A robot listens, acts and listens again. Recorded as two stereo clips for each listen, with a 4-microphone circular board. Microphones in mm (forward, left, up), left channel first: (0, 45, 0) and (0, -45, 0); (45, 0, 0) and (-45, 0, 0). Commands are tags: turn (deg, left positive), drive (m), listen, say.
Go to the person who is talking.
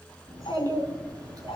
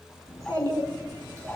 <turn deg="-130"/>
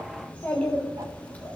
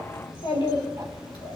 <turn deg="15"/>
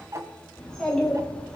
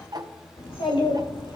<drive m="1.0"/>
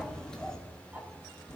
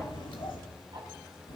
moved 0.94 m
<drive m="1.0"/>
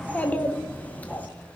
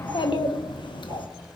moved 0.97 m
<turn deg="20"/>
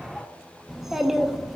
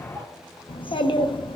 <drive m="1.0"/>
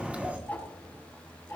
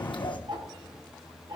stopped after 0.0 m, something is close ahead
<turn deg="-15"/>
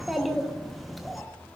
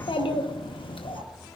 <say>I am next to the child speaking.</say>